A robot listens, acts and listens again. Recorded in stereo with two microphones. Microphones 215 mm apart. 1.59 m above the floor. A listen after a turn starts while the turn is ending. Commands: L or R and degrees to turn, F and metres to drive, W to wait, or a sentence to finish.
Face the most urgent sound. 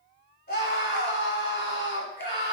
L55
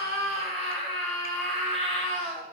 Found it: a scream, straight ahead.